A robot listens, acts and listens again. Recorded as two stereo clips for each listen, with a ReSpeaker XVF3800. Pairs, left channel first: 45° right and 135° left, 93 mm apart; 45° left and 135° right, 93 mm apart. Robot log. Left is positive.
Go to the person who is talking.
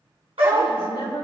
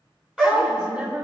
note: The woman speaking: 55° right.
cmd yaw -55
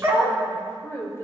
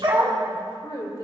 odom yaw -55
note: The woman speaking is now 15° left.
cmd yaw +15
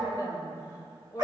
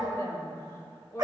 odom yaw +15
cmd fwd 1.0
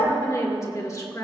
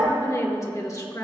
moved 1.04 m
cmd fwd 1.0
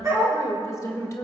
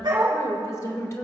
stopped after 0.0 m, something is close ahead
end: I am next to the woman speaking.